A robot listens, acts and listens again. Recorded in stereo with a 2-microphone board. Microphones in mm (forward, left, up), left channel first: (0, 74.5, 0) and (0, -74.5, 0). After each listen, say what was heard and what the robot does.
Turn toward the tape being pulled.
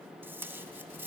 Turn 30° right.
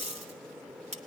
So it is at 130° right. Turn 130° right.
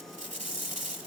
The tape being pulled is now 55° right. Turn 55° right.
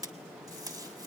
The tape being pulled is now 25° right. Turn 25° right.
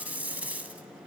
The tape being pulled is now 10° right. Turn 10° right.
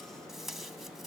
Found it: tape being pulled, straight ahead.